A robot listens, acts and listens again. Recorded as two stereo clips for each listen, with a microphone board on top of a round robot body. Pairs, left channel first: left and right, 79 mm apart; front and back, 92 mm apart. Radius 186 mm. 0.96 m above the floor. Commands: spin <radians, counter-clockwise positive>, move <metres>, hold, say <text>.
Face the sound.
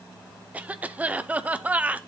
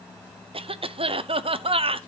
spin -2.79
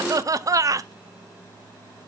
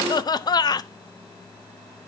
spin -0.79
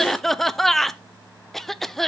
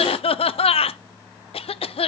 say Facing the cough, under 1 m away.